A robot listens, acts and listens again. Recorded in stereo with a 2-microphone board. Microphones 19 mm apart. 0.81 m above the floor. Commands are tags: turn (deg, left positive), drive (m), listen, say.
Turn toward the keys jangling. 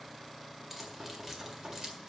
<turn deg="-35"/>
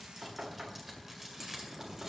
<turn deg="-25"/>
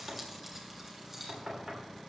<turn deg="-20"/>
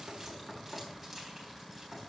<listen/>
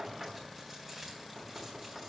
<turn deg="-10"/>
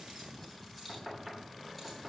<say>Facing the keys jangling, 2 to 4 m away.</say>